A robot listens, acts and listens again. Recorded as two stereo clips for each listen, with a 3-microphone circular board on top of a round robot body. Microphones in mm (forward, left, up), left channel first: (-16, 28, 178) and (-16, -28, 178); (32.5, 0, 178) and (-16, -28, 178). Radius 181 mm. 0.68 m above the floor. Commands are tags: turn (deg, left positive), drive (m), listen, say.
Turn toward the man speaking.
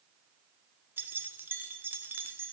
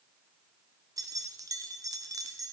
<listen/>
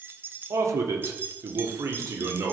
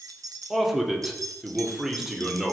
<turn deg="-65"/>
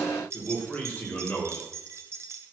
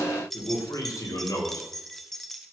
<turn deg="25"/>
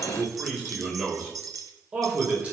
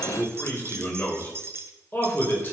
<turn deg="-25"/>
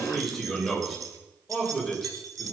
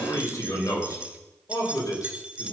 <say>Facing the man speaking.</say>